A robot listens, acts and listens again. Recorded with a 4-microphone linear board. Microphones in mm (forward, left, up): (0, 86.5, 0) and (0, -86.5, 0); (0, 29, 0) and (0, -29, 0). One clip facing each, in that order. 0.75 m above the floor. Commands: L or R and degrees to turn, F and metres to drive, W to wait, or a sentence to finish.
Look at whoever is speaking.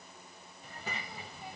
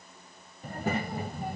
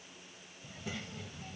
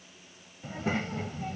R55
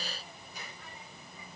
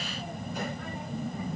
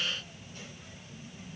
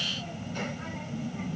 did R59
R65
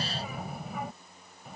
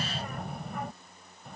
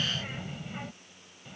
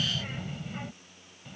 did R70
Found it: a child speaking, straight ahead.